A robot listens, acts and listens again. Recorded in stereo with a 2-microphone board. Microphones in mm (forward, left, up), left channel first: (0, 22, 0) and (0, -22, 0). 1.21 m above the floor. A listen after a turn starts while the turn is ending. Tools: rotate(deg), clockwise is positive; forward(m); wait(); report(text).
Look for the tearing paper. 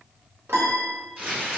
rotate(25)
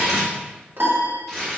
report("Found it: tearing paper, straight ahead, 1 to 2 m away.")